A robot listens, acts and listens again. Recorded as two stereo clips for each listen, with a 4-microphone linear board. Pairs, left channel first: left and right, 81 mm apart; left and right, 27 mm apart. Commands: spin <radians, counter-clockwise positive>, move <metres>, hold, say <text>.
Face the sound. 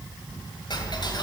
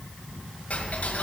spin 1.13
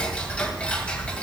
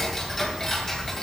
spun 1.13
spin 0.26
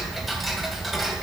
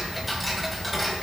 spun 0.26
say Facing the ticking, 2 to 4 m away.